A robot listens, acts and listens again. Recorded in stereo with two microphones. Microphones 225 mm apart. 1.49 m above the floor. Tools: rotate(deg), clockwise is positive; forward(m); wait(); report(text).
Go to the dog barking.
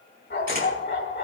rotate(-60)
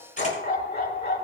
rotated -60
rotate(-50)
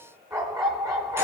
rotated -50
rotate(15)
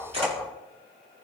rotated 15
forward(1.0)
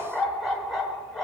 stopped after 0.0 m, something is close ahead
report("Something is in my way. I am facing the dog barking but have not reached it.")